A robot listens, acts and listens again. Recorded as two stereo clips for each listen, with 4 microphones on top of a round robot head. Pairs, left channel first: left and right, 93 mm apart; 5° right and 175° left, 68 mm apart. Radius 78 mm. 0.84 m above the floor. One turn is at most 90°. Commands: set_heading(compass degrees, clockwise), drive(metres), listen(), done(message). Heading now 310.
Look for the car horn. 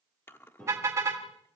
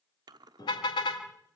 set_heading(335)
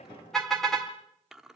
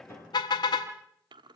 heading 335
done("Found it: a car horn, straight ahead.")